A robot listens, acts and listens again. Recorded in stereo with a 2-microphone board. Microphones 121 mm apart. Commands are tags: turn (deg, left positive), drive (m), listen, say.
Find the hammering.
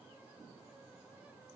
<listen/>
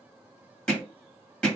<turn deg="30"/>
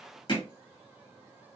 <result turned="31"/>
<turn deg="140"/>
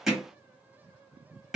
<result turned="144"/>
<say>Found it: hammering, straight ahead.</say>